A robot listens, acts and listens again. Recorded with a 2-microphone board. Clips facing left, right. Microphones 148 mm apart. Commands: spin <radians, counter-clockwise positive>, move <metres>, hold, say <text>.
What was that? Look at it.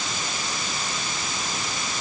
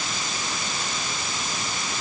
hold
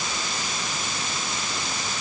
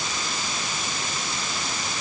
hold
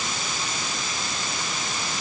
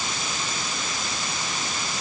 say I can't make out anything to turn to.